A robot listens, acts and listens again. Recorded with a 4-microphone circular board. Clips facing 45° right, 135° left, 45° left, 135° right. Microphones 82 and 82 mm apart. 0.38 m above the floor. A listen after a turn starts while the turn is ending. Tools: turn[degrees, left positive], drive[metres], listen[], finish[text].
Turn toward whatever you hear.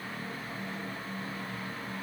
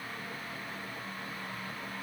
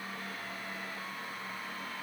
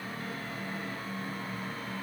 Action: listen[]
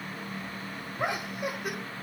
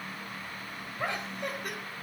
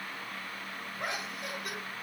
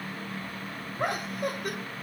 Thought: The laughter: 130° right.
Action: turn[-130]
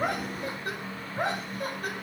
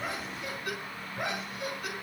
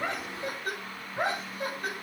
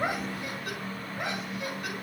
Action: finish[Found it: laughter, straight ahead.]